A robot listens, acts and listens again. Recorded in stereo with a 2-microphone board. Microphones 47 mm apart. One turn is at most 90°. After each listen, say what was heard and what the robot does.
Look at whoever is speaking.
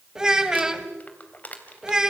Turn 30° right.
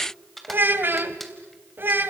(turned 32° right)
So it is at 135° right. Turn 90° right.
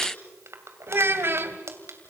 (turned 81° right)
The child speaking is now 55° right. Turn 55° right.
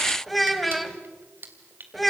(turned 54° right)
Found it: a child speaking, straight ahead.